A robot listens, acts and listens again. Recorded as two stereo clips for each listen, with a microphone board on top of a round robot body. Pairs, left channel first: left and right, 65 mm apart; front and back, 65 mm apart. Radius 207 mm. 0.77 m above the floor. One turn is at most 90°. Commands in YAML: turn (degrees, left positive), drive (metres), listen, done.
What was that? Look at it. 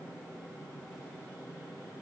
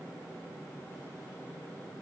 listen: true
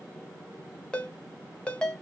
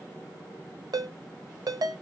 turn: 90
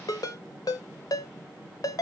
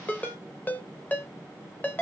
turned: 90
turn: 65
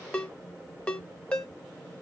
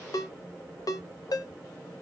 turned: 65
turn: 15
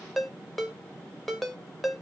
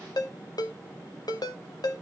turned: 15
done: "Facing the ringtone, under 1 m away."